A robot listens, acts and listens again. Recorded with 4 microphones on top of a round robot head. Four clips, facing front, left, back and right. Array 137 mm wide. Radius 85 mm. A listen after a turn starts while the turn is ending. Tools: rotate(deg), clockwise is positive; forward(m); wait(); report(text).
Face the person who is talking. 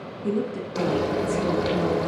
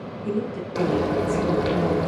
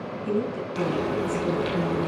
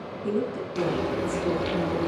rotate(35)
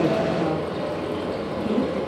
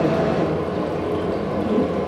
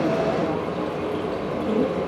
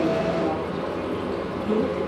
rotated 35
rotate(-25)
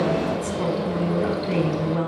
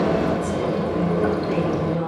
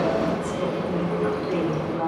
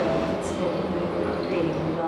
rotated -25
rotate(-10)
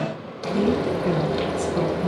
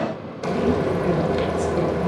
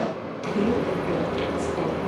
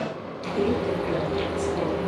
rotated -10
wait()
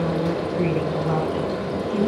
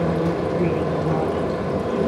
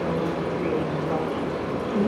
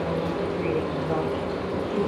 wait()
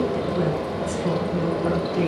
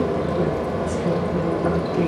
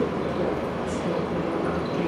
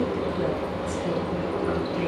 report("Facing where the woman speaking came from. I can't hear it now.")